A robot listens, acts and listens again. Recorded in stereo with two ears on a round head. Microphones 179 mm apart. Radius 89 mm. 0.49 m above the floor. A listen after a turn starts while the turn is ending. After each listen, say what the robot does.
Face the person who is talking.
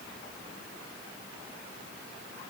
Keep listening.
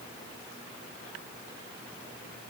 Keep listening.
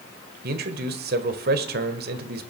Turn 55° right.
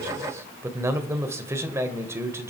Turn 15° right.
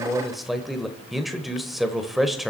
Found it: a man speaking, straight ahead, 1 to 2 m away.